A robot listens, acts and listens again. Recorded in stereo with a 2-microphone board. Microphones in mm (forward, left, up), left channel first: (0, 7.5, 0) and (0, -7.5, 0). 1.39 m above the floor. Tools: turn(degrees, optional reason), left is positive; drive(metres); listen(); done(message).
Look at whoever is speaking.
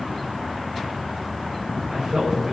turn(degrees=-55, reason="The man speaking: about 55° right or 125° right.")
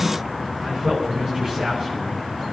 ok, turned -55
turn(degrees=-70, reason="So it is at 70° right.")
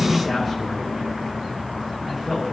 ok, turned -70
done("Found it: a man speaking, straight ahead, over 4 m away.")